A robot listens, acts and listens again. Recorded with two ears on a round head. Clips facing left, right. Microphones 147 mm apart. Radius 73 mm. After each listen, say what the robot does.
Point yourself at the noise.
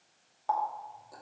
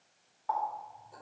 Turn 50° left.
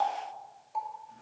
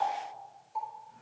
Turn 75° left.
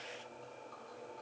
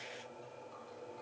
Keep listening.
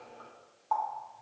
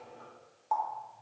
Turn 10° right.
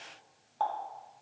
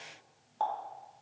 Found it: a running tap, straight ahead, 2 to 4 m away.